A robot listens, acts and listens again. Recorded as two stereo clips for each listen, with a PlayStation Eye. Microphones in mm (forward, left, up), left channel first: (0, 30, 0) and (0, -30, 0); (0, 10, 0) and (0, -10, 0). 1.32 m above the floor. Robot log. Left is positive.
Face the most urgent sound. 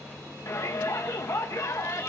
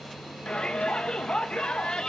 note: The shout: about 60° left or 120° left.
cmd yaw +60
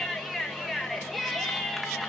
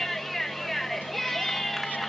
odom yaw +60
end: Facing the shout.